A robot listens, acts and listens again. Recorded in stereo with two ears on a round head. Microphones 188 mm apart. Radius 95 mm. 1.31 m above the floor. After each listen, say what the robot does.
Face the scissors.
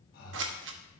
Turn 60° right.
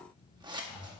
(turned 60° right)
Turn 25° right.
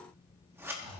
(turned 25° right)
Turn 10° right.
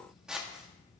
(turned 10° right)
Facing the scissors.